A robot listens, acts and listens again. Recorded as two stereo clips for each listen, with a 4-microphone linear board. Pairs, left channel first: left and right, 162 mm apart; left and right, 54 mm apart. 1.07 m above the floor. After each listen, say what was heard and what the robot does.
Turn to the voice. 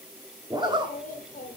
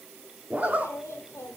The child speaking: about 55° left or 125° left. Turn 55° left.
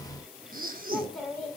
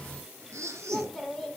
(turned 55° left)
Facing the child speaking, 2 to 4 m away.